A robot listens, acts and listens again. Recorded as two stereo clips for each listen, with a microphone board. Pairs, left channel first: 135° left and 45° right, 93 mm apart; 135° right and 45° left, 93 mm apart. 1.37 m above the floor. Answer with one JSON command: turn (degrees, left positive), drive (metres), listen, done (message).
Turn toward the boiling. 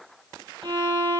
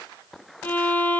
{"listen": true}
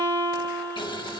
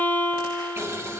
{"turn": 105}
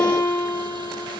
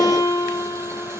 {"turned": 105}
{"listen": true}
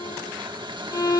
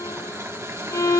{"turn": -15}
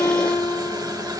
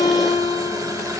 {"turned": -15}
{"done": "Facing the boiling, 1 to 2 m away."}